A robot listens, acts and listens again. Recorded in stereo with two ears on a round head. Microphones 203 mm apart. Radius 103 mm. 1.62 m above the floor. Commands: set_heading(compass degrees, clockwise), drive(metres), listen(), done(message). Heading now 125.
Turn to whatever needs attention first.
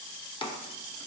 listen()
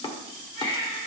set_heading(60)
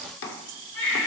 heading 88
set_heading(18)
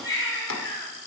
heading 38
set_heading(23)
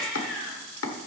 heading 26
done("Found it: a baby crying, straight ahead.")